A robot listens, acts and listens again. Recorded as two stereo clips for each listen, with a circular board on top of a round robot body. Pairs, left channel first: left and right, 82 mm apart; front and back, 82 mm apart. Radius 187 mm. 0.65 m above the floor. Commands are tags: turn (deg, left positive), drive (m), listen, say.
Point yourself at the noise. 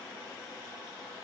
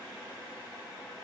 <listen/>
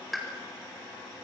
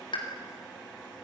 <say>Facing the pop.</say>